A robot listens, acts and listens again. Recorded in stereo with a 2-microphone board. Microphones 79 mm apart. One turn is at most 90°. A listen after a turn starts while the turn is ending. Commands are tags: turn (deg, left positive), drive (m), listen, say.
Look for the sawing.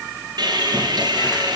<turn deg="-60"/>
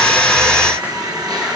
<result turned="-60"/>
<turn deg="-60"/>
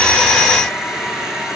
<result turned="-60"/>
<turn deg="-10"/>
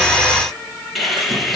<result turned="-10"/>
<say>Facing the sawing.</say>